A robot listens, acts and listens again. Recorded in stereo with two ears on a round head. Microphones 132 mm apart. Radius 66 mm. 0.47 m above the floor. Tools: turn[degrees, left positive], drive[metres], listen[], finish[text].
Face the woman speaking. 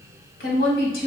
Thought: The woman speaking: about 70° left or 110° left.
Action: turn[70]
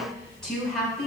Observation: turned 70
Action: finish[Facing the woman speaking.]